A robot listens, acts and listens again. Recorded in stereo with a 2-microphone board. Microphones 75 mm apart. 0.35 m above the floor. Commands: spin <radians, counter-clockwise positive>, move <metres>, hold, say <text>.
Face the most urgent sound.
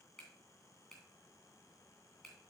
hold
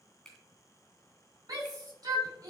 spin -0.87
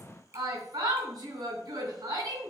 spin -1.31
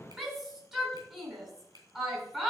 spin -0.17
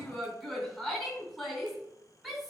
say Found it: a shout, straight ahead, 2 to 4 m away.